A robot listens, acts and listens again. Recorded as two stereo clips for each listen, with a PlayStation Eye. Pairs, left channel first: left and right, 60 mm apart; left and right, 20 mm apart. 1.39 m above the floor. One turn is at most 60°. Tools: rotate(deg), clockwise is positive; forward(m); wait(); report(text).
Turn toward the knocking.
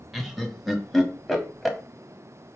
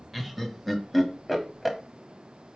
wait()
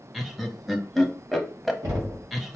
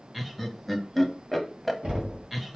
rotate(60)
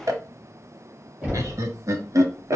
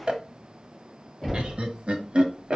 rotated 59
rotate(15)
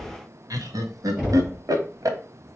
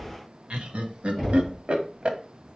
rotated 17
report("Found it: knocking, straight ahead, 2 to 4 m away.")